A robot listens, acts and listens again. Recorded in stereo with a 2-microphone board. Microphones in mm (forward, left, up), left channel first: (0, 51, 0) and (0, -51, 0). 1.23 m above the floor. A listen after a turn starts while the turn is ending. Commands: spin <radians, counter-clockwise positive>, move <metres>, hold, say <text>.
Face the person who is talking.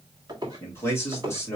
spin 0.44
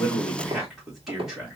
say Found it: a man speaking, straight ahead, 2 to 4 m away.